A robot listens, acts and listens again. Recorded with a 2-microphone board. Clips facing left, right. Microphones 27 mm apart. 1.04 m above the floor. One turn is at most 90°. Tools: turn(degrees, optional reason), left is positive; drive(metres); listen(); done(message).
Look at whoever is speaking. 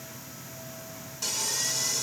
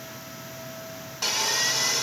listen()
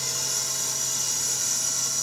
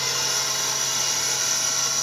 listen()
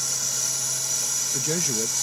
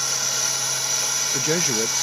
turn(degrees=-30, reason="The man speaking: about 30° right or 150° right.")
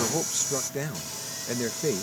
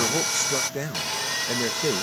done("Found it: a man speaking, straight ahead.")